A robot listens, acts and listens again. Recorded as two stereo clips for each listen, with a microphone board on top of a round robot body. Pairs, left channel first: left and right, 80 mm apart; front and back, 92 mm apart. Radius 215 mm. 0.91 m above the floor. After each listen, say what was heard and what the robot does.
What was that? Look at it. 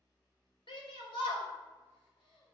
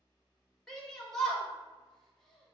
The shout: 85° left. Turn 85° left.
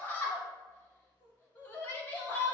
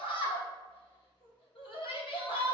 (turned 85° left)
The shout is now 25° left. Turn 25° left.
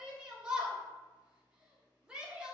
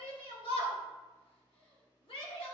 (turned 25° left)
The shout is now 10° right. Turn 10° right.
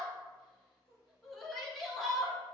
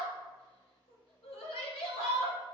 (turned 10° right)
Facing the shout.